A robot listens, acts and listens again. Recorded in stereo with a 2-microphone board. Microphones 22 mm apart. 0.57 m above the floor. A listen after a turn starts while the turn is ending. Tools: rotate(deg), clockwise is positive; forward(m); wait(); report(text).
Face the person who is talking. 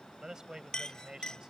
rotate(30)
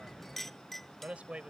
rotate(110)
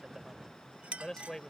rotate(-30)
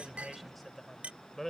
rotate(-15)
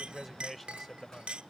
report("Facing the man speaking.")